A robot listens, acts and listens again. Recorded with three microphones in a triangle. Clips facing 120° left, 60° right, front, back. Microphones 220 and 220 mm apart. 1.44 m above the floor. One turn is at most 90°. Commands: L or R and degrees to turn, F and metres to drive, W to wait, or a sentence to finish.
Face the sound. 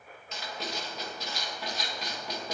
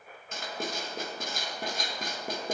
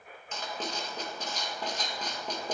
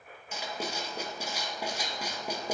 R90
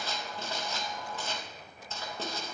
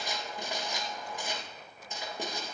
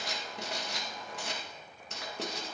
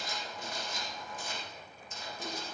L15
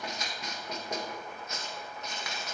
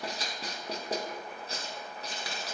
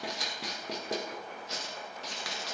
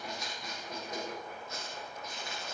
Found it: writing, straight ahead, 1 to 2 m away.